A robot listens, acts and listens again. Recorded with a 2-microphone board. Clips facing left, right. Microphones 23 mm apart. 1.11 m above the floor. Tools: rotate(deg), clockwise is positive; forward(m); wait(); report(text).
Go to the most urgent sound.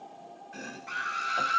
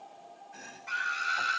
rotate(30)
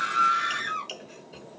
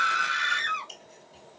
rotate(145)
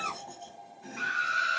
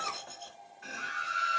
rotate(-30)
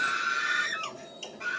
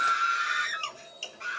forward(1.0)
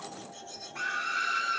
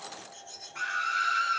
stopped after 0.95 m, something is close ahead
rotate(10)
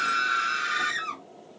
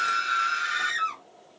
report("Arrived at the scream, straight ahead.")